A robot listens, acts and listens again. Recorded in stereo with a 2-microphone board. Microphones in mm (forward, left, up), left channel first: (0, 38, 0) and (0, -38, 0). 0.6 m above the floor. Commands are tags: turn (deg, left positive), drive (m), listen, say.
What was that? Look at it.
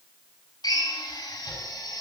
<turn deg="70"/>
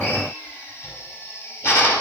<turn deg="35"/>
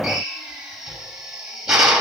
<turn deg="-10"/>
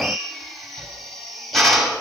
<say>Facing the drill.</say>